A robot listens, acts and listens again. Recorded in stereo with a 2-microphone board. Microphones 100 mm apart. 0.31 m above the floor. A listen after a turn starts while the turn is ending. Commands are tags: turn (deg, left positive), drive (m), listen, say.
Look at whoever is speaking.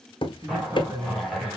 <turn deg="-30"/>
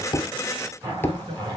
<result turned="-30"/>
<turn deg="-110"/>
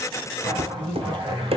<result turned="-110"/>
<turn deg="-15"/>
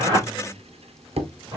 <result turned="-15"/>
<listen/>
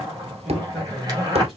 <say>Found it: a man speaking, straight ahead, 2 to 4 m away.</say>